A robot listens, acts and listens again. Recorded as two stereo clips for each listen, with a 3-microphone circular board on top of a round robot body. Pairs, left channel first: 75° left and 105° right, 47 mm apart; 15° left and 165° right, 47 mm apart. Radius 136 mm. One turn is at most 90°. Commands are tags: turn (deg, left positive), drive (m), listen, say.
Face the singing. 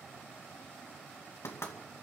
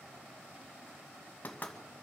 <listen/>
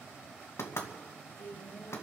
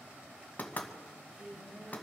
<turn deg="90"/>
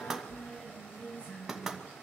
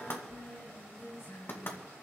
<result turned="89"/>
<turn deg="20"/>
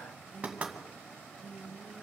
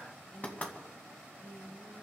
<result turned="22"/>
<say>Found it: singing, straight ahead, over 4 m away.</say>